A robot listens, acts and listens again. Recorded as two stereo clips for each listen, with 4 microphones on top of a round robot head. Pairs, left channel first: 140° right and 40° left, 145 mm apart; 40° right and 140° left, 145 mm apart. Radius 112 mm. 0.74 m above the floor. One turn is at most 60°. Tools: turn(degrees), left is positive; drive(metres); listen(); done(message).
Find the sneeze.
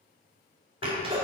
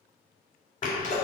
turn(degrees=-10)
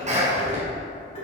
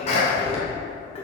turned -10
done("Found it: a sneeze, straight ahead, 2 to 4 m away.")